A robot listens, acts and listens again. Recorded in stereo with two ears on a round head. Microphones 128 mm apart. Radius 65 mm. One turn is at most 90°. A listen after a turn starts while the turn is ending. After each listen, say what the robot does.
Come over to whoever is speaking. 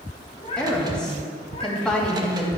Turn 30° left.
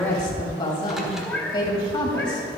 Turn 90° left.
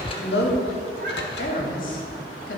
Turn 60° left.
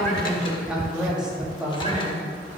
Drive 1.0 m forward.
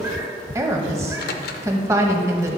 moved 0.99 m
Turn 20° right.
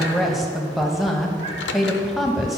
Drive 1.0 m forward.
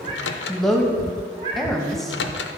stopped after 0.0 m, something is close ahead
I am next to the woman speaking.